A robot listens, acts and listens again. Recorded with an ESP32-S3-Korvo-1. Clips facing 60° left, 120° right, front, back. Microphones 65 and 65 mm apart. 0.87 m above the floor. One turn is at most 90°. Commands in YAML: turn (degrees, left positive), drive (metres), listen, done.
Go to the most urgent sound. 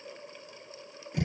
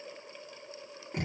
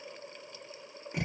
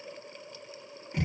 listen: true
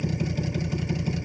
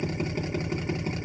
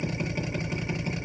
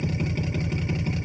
listen: true
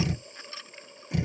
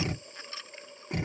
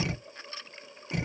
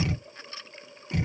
done: "I can't make out anything urgent, only a drill."